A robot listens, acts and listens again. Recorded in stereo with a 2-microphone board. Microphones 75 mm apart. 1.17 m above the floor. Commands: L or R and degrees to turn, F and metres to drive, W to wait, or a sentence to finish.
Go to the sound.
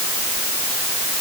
W
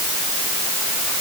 W
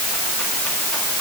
I can't make out anything to turn to.